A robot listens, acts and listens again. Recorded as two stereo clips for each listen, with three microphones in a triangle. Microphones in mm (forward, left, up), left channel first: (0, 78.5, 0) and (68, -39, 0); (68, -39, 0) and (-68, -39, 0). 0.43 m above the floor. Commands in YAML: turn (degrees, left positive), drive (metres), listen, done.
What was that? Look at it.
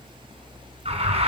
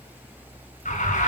turn: -20
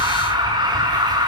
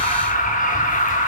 done: "Found it: an alarm, straight ahead."